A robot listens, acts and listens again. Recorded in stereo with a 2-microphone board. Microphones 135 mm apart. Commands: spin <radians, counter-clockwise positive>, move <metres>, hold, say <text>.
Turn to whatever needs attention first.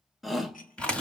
spin 0.52
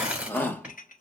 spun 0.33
spin 2.88
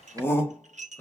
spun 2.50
spin 0.35
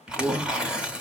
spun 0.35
say Found it: a shout, straight ahead, under 1 m away.